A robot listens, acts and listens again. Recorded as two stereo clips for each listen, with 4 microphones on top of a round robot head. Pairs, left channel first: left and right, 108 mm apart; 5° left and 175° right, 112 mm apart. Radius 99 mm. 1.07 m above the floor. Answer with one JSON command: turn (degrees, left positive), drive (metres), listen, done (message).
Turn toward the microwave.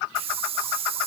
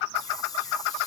{"listen": true}
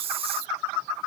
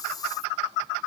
{"listen": true}
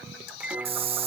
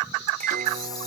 {"turn": -170}
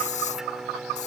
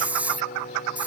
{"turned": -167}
{"done": "Found it: a microwave, straight ahead."}